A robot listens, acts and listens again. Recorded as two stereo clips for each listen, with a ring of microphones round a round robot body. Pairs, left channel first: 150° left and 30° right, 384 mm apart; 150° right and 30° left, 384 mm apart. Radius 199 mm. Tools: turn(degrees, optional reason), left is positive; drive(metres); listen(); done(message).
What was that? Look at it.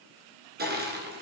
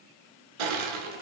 turn(degrees=35, reason="The crushing: 35° left.")
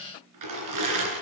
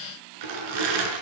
turn(degrees=10, reason="The crushing is now 10° left.")
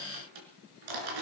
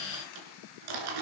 done("Facing the crushing.")